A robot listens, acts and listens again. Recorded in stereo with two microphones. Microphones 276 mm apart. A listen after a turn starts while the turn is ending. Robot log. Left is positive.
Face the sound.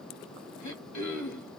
cmd yaw +90
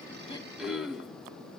end: Found it: throat clearing, straight ahead.